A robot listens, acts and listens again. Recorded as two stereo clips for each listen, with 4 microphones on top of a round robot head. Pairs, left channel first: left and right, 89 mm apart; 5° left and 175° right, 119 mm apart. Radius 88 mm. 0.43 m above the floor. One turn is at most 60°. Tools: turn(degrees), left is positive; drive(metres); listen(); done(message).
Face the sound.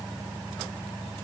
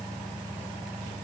listen()
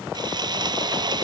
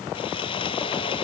turn(degrees=-55)
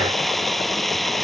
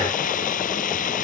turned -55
done("Facing the sawing.")